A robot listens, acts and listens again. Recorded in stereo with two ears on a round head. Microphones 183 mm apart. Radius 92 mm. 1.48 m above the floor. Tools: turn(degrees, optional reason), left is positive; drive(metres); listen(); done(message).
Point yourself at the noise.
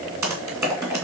turn(degrees=-30)
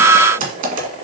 turn(degrees=-140, reason="So it is at 140° right.")
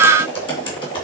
turn(degrees=25, reason="The typing on a keyboard is now 25° left.")
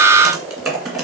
done("Facing the typing on a keyboard, 2 to 4 m away.")